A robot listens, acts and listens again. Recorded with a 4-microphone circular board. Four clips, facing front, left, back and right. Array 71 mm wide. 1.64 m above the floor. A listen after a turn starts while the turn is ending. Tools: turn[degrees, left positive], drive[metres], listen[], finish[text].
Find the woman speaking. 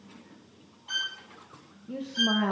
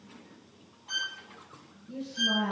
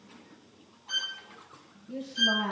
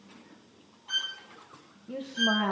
Thought: The woman speaking: 50° right.
Action: turn[-50]
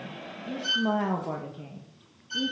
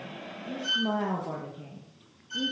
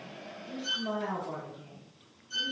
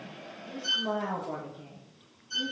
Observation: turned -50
Thought: The woman speaking is now 20° left.
Action: turn[20]
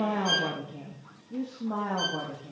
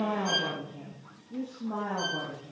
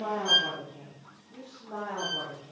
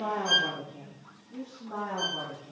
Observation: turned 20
Thought: The woman speaking is now 15° left.
Action: turn[15]
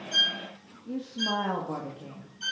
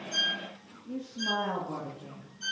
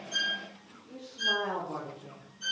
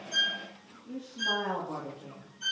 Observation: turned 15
Action: finish[Found it: a woman speaking, straight ahead, 2 to 4 m away.]